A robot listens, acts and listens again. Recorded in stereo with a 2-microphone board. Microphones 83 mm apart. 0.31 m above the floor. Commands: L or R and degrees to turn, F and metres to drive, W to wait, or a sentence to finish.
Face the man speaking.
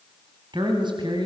R60
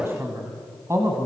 R35
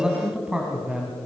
R15
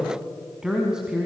R10
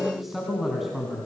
Found it: a man speaking, straight ahead.